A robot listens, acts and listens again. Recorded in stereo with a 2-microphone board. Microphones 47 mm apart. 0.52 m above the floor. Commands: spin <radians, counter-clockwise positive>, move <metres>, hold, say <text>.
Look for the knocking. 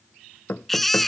spin 0.87
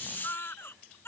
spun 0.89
hold
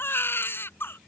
hold
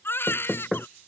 say Facing the knocking.